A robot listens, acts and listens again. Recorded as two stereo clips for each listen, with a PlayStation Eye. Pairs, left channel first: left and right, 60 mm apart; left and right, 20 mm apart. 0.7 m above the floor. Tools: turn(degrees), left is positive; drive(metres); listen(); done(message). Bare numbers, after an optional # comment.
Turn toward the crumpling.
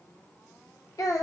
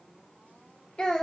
listen()
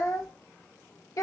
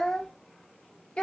listen()
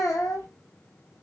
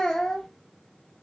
done("I can't make out crumpling, only a child speaking.")